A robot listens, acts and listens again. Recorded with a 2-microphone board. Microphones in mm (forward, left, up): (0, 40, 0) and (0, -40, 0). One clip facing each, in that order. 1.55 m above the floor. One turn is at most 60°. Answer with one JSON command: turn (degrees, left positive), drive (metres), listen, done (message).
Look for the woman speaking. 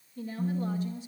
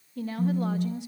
{"turn": -60}
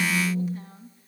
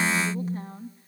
{"turn": -40}
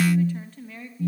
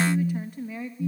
{"turn": -10}
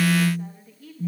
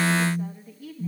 {"done": "Facing the woman speaking."}